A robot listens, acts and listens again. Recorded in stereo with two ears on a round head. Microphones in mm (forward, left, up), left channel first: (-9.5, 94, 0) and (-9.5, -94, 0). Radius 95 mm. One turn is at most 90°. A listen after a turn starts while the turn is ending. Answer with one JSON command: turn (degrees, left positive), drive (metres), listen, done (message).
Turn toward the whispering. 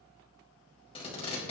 {"listen": true}
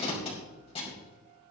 {"listen": true}
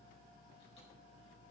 {"done": "I can't make out whispering to turn to."}